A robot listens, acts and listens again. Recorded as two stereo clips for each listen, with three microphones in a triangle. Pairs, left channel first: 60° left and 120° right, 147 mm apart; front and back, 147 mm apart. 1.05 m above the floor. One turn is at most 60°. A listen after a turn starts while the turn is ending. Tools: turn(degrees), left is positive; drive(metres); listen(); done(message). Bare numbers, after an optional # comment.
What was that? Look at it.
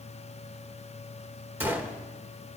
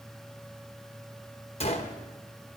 # The gunshot: 45° right.
turn(-45)
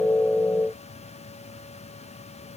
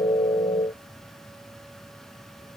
done("I heard a gunshot from this way, but can't make it out now.")